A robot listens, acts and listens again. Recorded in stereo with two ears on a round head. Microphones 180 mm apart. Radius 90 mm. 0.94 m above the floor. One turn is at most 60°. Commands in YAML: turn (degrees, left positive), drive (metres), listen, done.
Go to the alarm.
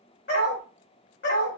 listen: true
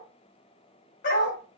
listen: true
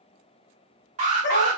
turn: -35
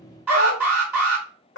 turn: -10
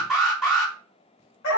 drive: 1.0
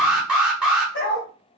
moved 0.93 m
drive: 1.0
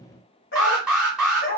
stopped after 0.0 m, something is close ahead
done: "I am next to the alarm."